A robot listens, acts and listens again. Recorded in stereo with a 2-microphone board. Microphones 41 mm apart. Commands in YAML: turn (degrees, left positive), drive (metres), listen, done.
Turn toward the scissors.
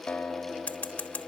turn: 35
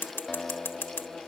turn: 110
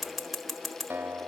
done: "Found it: scissors, straight ahead, 1 to 2 m away."